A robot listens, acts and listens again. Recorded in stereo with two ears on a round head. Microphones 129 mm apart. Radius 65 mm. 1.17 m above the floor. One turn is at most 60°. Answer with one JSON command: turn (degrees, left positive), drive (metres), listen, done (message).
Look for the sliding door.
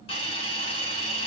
{"listen": true}
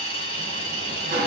{"turn": -60}
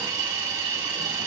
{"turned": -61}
{"listen": true}
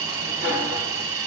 {"turn": -15}
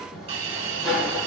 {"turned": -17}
{"done": "Facing the sliding door."}